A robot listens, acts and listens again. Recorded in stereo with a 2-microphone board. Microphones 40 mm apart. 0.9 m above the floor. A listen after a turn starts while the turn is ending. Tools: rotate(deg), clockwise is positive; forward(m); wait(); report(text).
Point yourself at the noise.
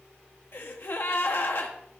rotate(-60)
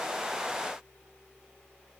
wait()
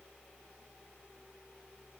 report("I heard a gasp, but can't make it out now. It was about straight ahead or 60° left.")